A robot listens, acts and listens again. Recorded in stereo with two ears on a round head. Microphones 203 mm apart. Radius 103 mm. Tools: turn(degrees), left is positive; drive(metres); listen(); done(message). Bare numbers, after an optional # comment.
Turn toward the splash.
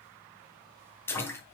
turn(30)
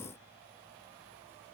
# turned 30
listen()
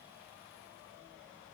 done("I heard a splash, but can't make it out now. It was about 20° right or 140° left.")